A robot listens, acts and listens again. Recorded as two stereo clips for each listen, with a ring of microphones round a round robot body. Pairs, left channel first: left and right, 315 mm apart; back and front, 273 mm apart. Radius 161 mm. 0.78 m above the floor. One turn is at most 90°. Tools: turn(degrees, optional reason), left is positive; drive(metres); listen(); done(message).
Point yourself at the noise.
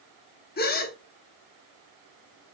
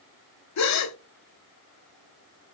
turn(degrees=90, reason="The gasp: 155° left.")
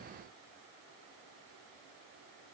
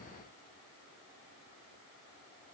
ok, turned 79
turn(degrees=75, reason="Nothing new. It was at 75° left.")
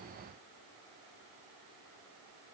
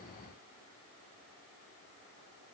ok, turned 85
turn(degrees=-10, reason="Nothing new. It was at 10° right.")
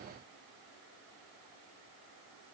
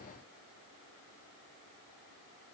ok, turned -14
done("I heard a gasp from this way, but can't make it out now.")